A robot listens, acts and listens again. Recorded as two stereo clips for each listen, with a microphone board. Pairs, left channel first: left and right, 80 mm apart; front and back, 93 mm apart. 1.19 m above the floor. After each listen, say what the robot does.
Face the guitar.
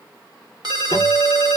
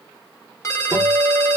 Turn 125° left.
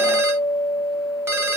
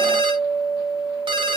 Turn 35° left.
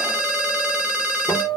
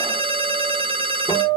Turn 15° left.
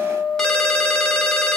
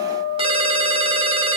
Facing the guitar.